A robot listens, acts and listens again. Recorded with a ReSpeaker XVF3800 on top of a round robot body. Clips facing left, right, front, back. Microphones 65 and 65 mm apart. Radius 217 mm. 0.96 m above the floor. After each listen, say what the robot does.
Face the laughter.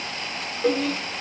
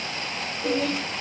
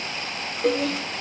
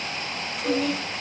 Turn 25° right.
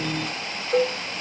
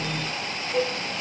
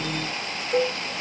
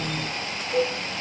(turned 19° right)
Keep listening.
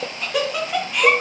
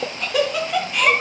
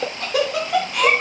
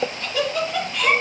Facing the laughter.